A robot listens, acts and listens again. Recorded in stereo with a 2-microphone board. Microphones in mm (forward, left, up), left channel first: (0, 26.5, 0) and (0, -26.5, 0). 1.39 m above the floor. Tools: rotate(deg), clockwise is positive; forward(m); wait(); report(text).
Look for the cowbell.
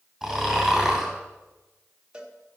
rotate(20)
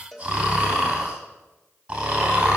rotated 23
report("Found it: a cowbell, straight ahead.")